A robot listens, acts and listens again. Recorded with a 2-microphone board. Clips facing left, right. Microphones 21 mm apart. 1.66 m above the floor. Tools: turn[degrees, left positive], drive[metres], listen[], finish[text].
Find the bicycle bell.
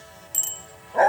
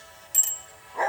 Action: turn[30]
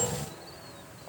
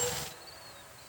Action: listen[]
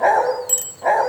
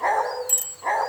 Thought: So it is at 145° left.
Action: turn[145]
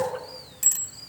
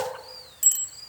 Action: finish[Found it: a bicycle bell, straight ahead, 2 to 4 m away.]